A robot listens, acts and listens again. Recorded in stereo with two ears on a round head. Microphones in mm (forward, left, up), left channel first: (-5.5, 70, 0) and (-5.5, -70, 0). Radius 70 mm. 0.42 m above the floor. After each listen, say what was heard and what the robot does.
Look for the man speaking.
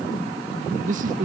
The man speaking: about 55° right or 125° right. Turn 55° right.
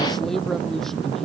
Found it: a man speaking, straight ahead.